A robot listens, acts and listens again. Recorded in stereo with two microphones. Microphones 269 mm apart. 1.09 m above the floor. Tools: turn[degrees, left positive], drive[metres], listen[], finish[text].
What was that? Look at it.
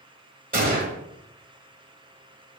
Thought: The gunshot: about 30° right or 150° right.
Action: turn[-30]
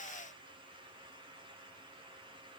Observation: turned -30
Action: listen[]
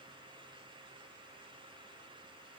Action: finish[I heard a gunshot, but can't make it out now. It was about straight ahead or 120° right.]